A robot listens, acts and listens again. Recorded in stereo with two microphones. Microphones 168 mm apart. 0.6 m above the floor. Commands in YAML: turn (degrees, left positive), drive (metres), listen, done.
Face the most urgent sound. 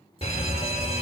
turn: 40
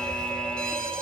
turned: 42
done: "Found it: a fire alarm, straight ahead, 2 to 4 m away."